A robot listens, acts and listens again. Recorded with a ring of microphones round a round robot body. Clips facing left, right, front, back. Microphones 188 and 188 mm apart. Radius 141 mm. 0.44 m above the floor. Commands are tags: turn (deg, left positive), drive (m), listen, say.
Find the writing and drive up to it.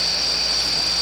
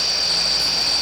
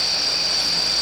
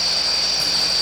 <listen/>
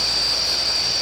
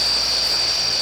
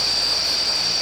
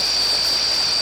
<listen/>
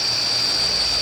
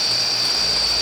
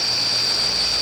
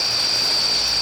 <say>I can't make out writing.</say>